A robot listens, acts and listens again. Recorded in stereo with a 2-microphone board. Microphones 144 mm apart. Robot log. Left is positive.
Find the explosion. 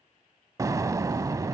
note: The explosion: about 25° right or 155° right.
cmd yaw -25
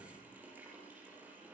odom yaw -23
cmd idle
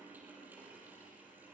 end: I heard an explosion, but can't make it out now. It was about straight ahead or 135° right.